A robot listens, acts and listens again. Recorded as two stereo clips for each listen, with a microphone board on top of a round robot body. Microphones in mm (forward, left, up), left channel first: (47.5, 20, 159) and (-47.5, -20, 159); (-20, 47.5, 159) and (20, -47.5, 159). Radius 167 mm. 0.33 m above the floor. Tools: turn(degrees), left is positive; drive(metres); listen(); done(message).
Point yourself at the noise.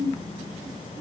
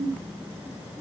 listen()
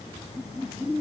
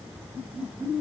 listen()
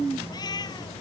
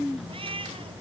turn(degrees=-30)
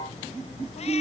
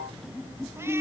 listen()
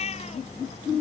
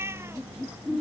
done("Facing the cat meowing.")